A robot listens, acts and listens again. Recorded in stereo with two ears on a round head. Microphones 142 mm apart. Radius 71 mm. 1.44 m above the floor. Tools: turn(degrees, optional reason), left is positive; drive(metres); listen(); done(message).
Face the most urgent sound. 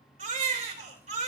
turn(degrees=-45, reason="The baby crying: about 45° right or 135° right.")
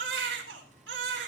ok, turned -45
turn(degrees=-85, reason="So it is at 85° right.")
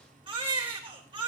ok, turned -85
turn(degrees=-35, reason="The baby crying is now 35° right.")
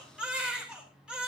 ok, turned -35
done("Found it: a baby crying, straight ahead.")